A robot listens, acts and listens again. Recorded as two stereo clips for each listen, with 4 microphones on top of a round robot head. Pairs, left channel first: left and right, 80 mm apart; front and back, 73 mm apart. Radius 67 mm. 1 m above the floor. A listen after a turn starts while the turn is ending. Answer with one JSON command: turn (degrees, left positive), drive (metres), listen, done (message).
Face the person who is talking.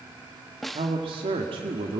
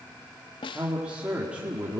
{"turn": -100}
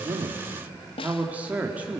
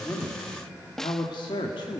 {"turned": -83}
{"turn": -20}
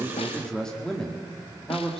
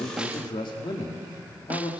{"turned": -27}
{"turn": 10}
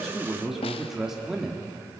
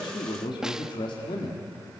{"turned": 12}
{"done": "Found it: a man speaking, straight ahead, 1 to 2 m away."}